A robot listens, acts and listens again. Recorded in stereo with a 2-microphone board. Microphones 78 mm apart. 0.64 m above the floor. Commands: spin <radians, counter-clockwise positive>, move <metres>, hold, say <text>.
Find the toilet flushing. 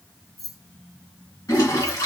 spin 0.87
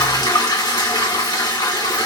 spin 1.40
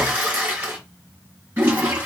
spin -0.35
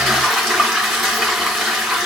say Found it: a toilet flushing, straight ahead.